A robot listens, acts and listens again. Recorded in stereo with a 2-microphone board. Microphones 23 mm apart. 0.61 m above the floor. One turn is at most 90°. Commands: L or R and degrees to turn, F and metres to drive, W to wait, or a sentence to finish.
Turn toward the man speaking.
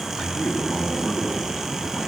L90
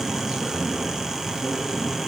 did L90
Found it: a man speaking, straight ahead.